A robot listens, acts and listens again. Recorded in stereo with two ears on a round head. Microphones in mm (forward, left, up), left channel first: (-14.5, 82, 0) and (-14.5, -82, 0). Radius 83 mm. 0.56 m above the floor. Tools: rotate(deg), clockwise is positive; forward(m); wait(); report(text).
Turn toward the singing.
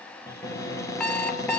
wait()
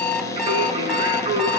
rotate(35)
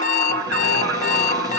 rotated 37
rotate(105)
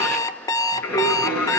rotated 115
report("Facing the singing, over 4 m away.")